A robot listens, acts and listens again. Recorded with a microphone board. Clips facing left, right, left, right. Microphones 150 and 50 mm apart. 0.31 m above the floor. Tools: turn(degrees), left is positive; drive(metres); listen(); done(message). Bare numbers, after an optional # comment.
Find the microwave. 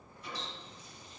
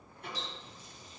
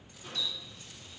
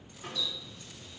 # The microwave: about 65° right or 115° right.
turn(-65)
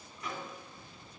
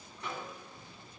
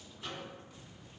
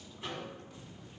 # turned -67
# So it is at 30° right.
turn(-30)
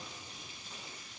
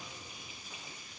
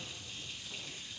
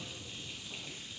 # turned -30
listen()
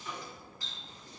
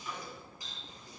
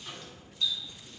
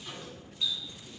done("Found it: a microwave, straight ahead.")